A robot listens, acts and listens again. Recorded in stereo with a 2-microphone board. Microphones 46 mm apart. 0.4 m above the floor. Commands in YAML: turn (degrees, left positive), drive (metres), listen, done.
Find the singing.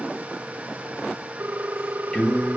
turn: 15
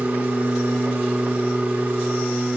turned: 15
turn: 30
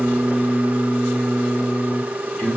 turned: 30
turn: 145
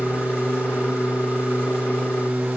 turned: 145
done: "Facing the singing, over 4 m away."